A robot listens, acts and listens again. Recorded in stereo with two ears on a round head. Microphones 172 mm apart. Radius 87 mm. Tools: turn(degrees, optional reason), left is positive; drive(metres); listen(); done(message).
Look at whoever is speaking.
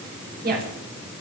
turn(degrees=-55, reason="The woman speaking: about 55° right or 125° right.")
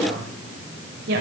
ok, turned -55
turn(degrees=-55, reason="So it is at 55° right.")
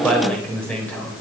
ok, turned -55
turn(degrees=10, reason="The woman speaking is now 10° left.")
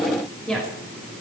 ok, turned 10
done("Found it: a woman speaking, straight ahead, over 4 m away.")